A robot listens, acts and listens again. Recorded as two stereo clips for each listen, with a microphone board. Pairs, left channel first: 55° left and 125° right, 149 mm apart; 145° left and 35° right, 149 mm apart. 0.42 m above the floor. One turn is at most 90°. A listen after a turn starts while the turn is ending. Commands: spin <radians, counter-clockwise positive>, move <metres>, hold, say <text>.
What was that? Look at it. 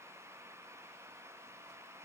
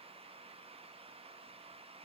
hold
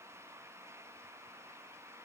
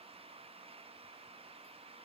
hold
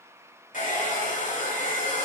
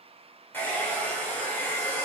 spin 1.22
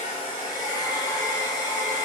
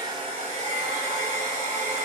say Found it: a hair dryer, straight ahead.